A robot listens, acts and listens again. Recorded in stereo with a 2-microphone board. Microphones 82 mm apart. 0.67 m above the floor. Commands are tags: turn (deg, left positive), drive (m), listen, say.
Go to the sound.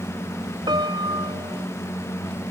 <turn deg="-65"/>
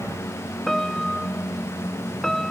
<drive m="1.0"/>
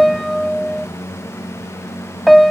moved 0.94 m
<drive m="1.0"/>
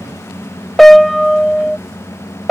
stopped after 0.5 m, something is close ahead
<say>Arrived at the piano, straight ahead.</say>